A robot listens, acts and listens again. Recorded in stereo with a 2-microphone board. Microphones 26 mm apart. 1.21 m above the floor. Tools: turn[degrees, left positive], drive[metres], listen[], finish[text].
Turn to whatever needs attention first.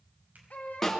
Thought: The baby crying: about 65° left or 115° left.
Action: turn[65]
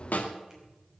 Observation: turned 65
Action: listen[]
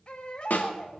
Thought: So it is at 45° left.
Action: turn[45]
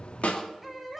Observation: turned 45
Action: finish[Facing the baby crying, 2 to 4 m away.]